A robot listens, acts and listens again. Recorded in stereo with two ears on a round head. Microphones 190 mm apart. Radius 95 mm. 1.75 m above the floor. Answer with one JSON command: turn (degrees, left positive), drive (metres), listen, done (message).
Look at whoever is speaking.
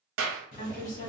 {"turn": 45}
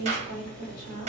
{"turn": 90}
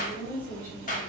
{"turn": 10}
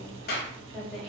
{"done": "Found it: a woman speaking, straight ahead, 1 to 2 m away."}